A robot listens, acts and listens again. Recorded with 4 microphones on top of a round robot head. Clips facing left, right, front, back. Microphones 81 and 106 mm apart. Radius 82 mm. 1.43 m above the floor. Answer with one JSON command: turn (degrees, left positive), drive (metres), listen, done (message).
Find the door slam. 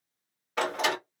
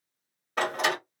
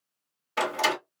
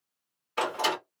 {"turn": -20}
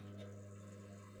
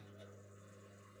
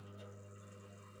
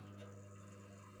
{"done": "Facing where the door slam came from. I can't hear it now."}